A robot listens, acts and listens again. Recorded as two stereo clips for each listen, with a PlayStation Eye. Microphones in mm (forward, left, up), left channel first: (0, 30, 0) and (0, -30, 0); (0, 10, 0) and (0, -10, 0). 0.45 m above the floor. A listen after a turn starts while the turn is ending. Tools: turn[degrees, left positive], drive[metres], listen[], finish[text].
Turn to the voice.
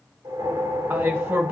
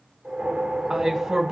Thought: The man speaking: about 35° right or 145° right.
Action: turn[-35]
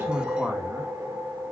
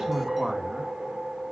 Action: listen[]
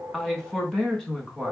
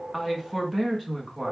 Action: finish[Facing the man speaking.]